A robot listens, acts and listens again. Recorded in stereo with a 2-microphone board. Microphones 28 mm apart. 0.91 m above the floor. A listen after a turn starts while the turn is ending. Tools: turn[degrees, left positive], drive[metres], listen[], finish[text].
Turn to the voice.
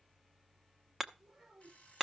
Thought: The child speaking: about 40° right or 140° right.
Action: turn[-40]
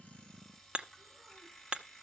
Action: listen[]
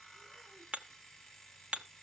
Action: listen[]
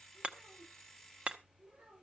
Thought: So it is at 100° right.
Action: turn[-100]
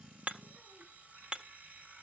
Action: listen[]
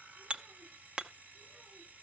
Action: listen[]
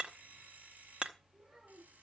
Action: finish[Facing the child speaking.]